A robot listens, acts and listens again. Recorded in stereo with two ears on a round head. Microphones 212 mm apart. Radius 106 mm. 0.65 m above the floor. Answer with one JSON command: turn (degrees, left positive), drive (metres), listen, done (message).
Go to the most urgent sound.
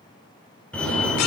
{"turn": 30}
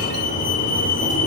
{"turn": 145}
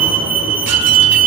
{"drive": 1.0}
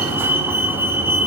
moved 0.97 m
{"turn": -10}
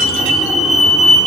{"drive": 1.0}
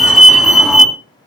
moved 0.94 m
{"drive": 1.0}
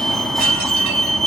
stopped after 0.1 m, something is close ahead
{"done": "I am next to the fire alarm."}